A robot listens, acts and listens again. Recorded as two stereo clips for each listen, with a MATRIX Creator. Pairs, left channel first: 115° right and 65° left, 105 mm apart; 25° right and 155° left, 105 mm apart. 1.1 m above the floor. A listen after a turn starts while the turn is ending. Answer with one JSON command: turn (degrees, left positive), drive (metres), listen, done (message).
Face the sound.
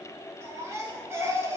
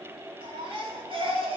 {"turn": 130}
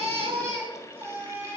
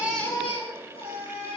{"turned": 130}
{"done": "Found it: a baby crying, straight ahead, 2 to 4 m away."}